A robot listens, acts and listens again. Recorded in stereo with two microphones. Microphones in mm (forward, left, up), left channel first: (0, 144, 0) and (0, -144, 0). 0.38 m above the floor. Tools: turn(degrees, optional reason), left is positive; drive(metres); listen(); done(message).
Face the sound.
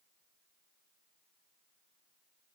listen()
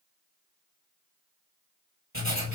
turn(degrees=-45, reason="The writing: about 45° right or 135° right.")
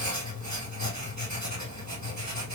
turn(degrees=-90, reason="So it is at 90° right.")
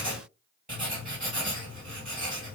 turn(degrees=-30, reason="The writing is now 30° right.")
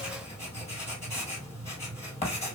turn(degrees=20, reason="The writing is now 20° left.")
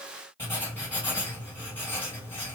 turn(degrees=10, reason="The writing is now 10° left.")
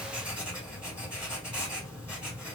done("Found it: writing, straight ahead.")